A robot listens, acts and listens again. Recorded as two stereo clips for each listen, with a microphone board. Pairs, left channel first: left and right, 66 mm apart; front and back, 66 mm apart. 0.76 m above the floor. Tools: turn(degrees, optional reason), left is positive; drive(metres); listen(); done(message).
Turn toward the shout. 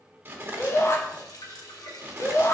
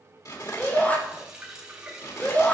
turn(degrees=60, reason="The shout: 60° left.")
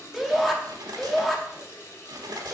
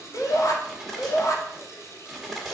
done("Found it: a shout, straight ahead, 1 to 2 m away.")